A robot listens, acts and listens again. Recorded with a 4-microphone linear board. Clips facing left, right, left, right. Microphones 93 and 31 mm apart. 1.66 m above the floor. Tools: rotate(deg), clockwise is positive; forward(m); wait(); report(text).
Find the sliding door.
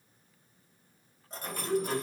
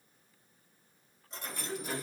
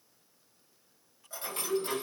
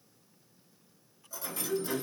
rotate(-65)
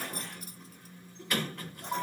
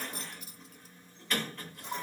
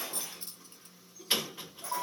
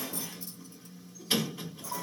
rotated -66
rotate(-15)
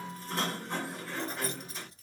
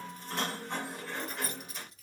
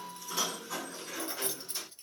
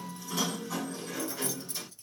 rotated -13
report("Found it: a sliding door, straight ahead, 2 to 4 m away.")